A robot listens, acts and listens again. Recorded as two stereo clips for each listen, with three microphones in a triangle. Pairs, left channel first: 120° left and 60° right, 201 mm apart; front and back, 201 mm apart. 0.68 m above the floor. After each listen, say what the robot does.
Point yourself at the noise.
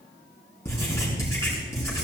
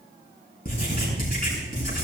Turn 45° left.
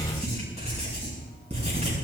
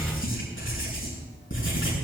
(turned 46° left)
Facing the writing.